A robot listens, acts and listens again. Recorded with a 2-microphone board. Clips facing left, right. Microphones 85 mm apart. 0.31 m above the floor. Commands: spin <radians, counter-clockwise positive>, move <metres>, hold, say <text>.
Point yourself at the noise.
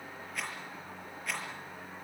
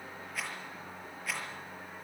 spin 0.52
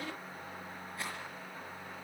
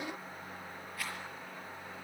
spin 2.62
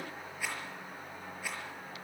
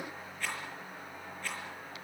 spin 0.17
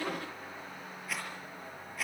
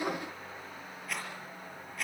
say Facing the rattle.